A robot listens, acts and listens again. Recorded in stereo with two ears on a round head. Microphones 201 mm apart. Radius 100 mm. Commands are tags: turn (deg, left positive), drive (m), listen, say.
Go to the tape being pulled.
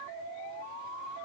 <listen/>
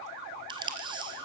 <turn deg="-20"/>
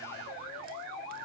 <listen/>
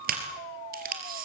<turn deg="-140"/>
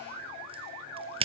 <turn deg="-25"/>
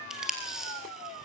<drive m="1.0"/>
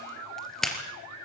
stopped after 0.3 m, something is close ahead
<say>Something is in my way. I am facing the tape being pulled but have not reached it.</say>